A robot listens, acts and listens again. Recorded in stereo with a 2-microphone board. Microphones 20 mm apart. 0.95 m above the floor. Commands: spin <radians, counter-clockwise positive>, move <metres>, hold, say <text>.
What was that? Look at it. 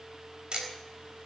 spin -0.79
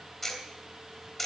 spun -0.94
spin 0.26
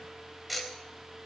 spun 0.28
say Facing the ticking.